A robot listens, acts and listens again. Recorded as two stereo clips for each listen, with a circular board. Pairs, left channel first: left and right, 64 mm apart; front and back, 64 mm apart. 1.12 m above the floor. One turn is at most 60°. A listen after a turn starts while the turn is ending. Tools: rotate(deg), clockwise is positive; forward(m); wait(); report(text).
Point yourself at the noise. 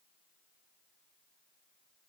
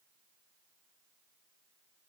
wait()
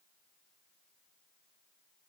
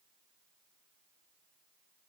wait()
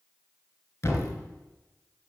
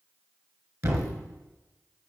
rotate(-60)
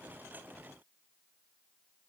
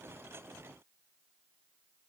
rotate(-60)
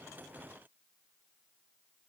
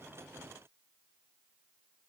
rotate(-20)
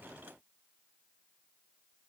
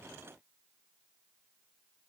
report("Facing where the thud came from. I can't hear it now.")